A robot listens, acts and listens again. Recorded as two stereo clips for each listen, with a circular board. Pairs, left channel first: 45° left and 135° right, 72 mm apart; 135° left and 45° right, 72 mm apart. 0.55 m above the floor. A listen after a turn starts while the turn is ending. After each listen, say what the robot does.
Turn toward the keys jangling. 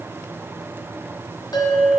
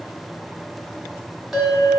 Keep listening.
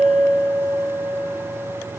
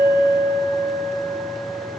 Keep listening.
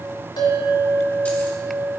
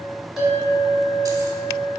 I can't make out keys jangling, only a bell.